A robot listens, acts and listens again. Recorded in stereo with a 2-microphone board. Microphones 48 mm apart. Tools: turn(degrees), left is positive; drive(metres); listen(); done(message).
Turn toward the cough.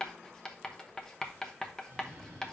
turn(degrees=-35)
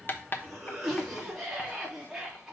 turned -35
done("Found it: a cough, straight ahead, 2 to 4 m away.")